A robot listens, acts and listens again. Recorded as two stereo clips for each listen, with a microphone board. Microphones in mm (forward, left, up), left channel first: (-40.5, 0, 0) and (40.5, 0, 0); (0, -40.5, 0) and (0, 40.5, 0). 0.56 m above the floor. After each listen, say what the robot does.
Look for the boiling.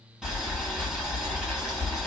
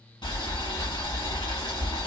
Turn 80° right.
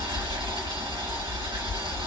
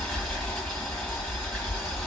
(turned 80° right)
Found it: boiling, straight ahead.